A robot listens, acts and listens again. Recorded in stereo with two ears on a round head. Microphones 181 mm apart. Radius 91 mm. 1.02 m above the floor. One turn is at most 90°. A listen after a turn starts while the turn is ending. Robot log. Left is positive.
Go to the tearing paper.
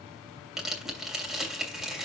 cmd yaw -30
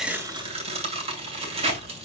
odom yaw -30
note: So it is at 145° right.
cmd yaw -90
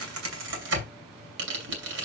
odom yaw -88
note: The tearing paper is now 60° right.
cmd yaw -60
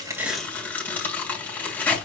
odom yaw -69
note: The tearing paper is now 10° left.
cmd yaw +10
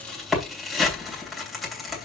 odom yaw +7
cmd fwd 1.0
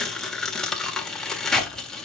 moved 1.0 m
cmd fwd 1.0
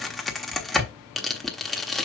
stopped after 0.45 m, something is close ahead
end: Arrived at the tearing paper, straight ahead.